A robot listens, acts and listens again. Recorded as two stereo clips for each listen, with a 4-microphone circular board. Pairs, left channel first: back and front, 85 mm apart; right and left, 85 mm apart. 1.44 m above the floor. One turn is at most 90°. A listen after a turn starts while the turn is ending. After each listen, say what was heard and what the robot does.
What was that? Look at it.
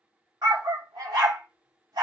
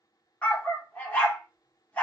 The dog barking: 25° right. Turn 25° right.
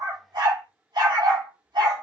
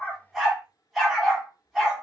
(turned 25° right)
Found it: a dog barking, straight ahead, 1 to 2 m away.